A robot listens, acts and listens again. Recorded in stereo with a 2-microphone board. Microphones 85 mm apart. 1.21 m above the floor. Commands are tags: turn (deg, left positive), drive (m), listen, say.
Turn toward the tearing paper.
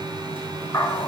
<listen/>
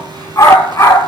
<listen/>
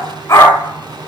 <say>I can't make out tearing paper, only a dog barking.</say>